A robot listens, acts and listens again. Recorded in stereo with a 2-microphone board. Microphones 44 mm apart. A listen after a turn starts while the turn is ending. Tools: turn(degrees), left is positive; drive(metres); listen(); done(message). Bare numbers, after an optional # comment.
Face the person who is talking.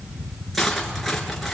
listen()
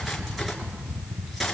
listen()
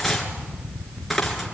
done("I can't make out anyone speaking, only cutlery clinking.")